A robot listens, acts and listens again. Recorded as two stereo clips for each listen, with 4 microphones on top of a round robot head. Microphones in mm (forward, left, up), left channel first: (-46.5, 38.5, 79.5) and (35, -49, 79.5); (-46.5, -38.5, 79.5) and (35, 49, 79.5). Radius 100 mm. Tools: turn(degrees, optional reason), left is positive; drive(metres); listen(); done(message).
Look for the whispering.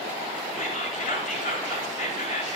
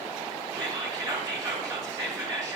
turn(degrees=105, reason="The whispering: 105° left.")
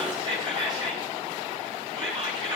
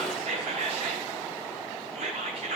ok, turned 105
done("Found it: whispering, straight ahead.")